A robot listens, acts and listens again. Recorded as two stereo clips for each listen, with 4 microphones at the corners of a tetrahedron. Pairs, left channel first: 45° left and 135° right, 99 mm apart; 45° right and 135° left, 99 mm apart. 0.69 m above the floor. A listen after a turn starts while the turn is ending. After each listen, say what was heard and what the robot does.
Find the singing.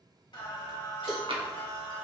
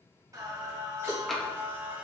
The singing: 60° left. Turn 60° left.
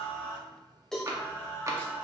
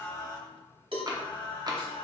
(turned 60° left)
The singing is now 25° right. Turn 25° right.
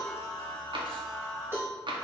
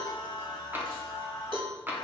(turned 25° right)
The singing is now 10° right. Turn 10° right.
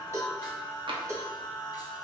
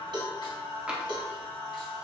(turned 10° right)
Facing the singing.